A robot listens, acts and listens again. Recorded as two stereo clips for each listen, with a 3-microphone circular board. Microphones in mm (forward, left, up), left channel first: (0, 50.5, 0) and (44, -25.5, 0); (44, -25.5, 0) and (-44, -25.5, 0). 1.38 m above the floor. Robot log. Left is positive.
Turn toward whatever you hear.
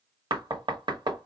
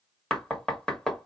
note: The knocking: 85° right.
cmd yaw -85
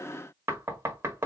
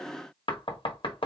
end: Facing the knocking.